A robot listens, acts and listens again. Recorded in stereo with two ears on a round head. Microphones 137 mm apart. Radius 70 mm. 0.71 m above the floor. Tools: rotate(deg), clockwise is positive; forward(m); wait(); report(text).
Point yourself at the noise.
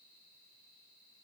wait()
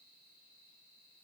wait()
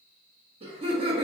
rotate(35)
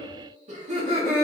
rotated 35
rotate(45)
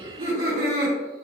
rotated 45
rotate(65)
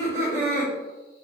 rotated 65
rotate(20)
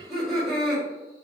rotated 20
report("Facing the laughter.")